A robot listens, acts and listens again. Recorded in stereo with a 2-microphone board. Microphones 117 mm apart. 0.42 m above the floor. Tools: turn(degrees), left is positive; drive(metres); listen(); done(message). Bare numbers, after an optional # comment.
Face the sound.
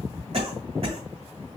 # The cough: about 60° right or 120° right.
turn(-60)
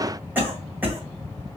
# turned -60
# So it is at 20° right.
turn(-20)
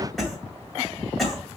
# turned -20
done("Found it: a cough, straight ahead.")